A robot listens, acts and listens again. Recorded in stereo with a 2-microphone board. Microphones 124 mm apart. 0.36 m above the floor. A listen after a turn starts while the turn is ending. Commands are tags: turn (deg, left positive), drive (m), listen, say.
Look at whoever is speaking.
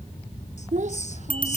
<turn deg="-70"/>
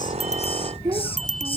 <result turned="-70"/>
<turn deg="-35"/>
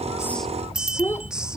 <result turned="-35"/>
<turn deg="20"/>
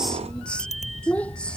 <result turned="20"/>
<turn deg="10"/>
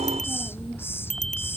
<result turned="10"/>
<listen/>
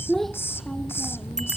<say>Facing the child speaking.</say>